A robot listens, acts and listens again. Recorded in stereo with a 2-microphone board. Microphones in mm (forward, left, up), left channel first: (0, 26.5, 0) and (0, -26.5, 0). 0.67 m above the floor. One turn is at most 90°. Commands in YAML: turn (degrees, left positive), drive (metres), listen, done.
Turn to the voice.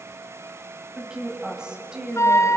turn: -15
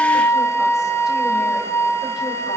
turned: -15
listen: true
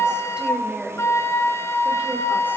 turn: -20
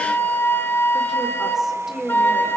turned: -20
turn: -30
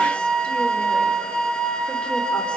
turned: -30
listen: true
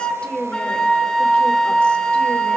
turn: 20
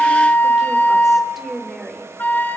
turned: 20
done: "Found it: a woman speaking, straight ahead."